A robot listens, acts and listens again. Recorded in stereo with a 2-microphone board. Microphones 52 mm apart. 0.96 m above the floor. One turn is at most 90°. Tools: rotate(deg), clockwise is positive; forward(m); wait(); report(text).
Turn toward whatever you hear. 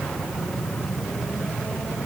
wait()
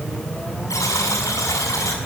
rotate(-90)
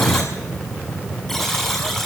report("Facing the buzzer, over 4 m away.")